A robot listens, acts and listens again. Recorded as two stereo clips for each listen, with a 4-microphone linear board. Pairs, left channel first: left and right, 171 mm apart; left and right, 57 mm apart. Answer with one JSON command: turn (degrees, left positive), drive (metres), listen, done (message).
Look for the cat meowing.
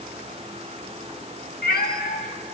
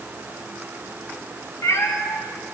{"turn": 60}
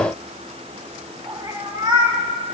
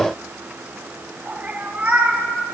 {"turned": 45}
{"turn": -30}
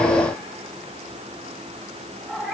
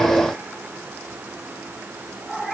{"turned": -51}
{"done": "Found it: a cat meowing, straight ahead."}